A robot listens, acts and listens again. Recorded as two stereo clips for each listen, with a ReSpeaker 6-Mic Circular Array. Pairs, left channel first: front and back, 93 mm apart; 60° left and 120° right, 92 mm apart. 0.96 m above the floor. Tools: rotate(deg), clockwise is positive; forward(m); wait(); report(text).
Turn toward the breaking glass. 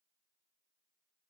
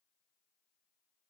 wait()
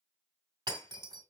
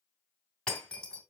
rotate(-140)
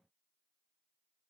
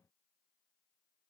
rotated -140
report("I heard breaking glass from this way, but can't make it out now.")